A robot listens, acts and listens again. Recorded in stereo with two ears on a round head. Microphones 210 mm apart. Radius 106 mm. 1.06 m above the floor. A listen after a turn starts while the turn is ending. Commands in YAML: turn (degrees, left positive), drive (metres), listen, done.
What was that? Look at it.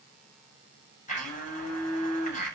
turn: 30
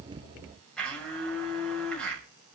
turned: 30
done: "Facing the blender, over 4 m away."